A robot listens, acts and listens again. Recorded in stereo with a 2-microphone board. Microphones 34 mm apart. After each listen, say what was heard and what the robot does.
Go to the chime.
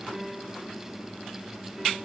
Keep listening.
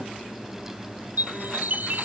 The chime: about 65° right or 115° right. Turn 65° right.
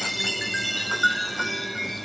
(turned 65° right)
Drive 1.0 m forward.
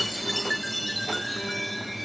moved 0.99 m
Drive 1.0 m forward.
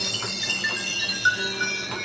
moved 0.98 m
Drive 1.0 m forward.
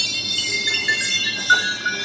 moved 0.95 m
Drive 1.0 m forward.
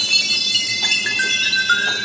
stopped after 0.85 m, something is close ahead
Arrived at the chime, straight ahead.